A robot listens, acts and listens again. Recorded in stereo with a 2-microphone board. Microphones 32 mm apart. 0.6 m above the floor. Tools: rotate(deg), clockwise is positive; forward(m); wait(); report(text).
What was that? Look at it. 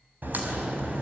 rotate(75)
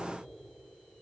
wait()
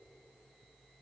report("I heard a crack, but can't make it out now. It was about straight ahead or 30° right.")